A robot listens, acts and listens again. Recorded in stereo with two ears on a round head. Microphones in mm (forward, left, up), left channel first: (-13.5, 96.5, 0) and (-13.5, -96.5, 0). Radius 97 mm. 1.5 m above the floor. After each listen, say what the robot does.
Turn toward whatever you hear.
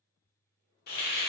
Turn 45° left.
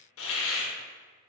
Turn 80° left.
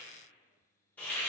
Turn 10° left.
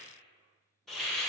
Facing the hiss.